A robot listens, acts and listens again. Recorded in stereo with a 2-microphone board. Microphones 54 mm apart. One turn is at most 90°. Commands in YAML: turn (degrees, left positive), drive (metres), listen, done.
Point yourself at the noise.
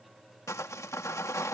turn: 90
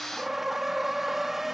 done: "Facing the sawing."